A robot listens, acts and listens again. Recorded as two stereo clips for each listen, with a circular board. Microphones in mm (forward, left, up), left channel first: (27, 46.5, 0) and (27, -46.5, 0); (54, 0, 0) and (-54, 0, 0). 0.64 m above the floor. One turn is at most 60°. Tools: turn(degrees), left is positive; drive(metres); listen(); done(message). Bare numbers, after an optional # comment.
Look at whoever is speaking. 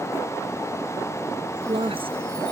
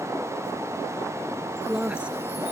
# The woman speaking: 100° right.
turn(-60)
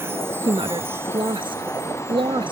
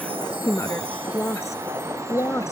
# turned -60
# The woman speaking is now 65° right.
turn(-60)
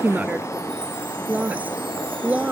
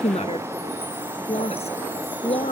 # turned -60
# The woman speaking is now 15° right.
turn(-15)
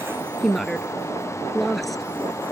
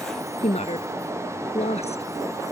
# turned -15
done("Found it: a woman speaking, straight ahead.")